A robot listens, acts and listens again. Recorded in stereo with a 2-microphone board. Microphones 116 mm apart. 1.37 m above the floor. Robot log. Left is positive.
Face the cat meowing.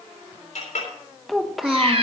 note: The cat meowing: about 55° right or 125° right.
cmd yaw -55
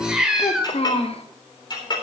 end: Found it: a cat meowing, straight ahead.